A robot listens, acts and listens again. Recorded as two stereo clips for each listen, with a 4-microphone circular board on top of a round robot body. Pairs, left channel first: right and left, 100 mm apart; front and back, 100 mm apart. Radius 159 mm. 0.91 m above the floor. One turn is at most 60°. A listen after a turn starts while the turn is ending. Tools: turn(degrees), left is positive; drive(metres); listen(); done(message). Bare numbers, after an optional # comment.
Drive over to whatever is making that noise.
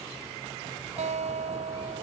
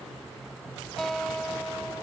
# The guitar: 85° left.
turn(60)
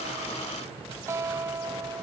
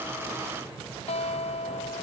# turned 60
# The guitar is now 25° left.
turn(25)
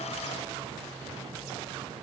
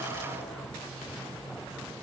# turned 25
listen()
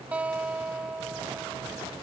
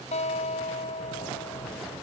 # The guitar is now 10° left.
turn(10)
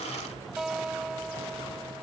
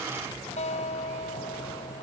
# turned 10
drive(1.0)
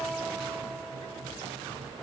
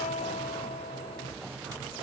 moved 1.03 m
drive(1.0)
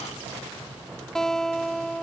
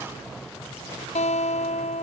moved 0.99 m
drive(1.0)
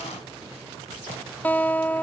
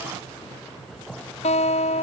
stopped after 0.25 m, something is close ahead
# The guitar is now 15° right.
turn(-15)
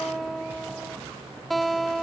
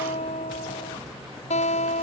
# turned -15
done("I am next to the guitar.")